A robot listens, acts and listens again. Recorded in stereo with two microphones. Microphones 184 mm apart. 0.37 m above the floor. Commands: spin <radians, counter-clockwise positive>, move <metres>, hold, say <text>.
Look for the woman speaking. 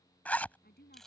spin 1.05
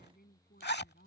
spin 1.05
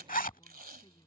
hold
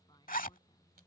hold
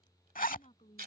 spin 0.61
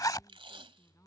hold
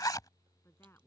spin 0.26
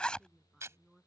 say Facing the woman speaking.